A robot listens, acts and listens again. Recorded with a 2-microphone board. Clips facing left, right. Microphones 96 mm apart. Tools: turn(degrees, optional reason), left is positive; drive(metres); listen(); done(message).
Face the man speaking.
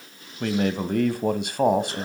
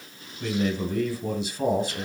turn(degrees=60, reason="The man speaking: about 60° left or 120° left.")
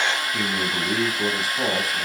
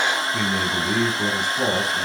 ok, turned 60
done("Found it: a man speaking, straight ahead.")